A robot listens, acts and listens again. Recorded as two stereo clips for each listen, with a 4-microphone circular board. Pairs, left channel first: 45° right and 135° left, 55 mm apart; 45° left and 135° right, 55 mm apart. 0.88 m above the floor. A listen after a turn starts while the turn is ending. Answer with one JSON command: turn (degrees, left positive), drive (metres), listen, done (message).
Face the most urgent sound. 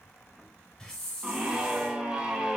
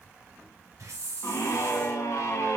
{"turn": 65}
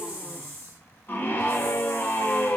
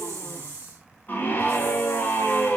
{"done": "Found it: a scream, straight ahead."}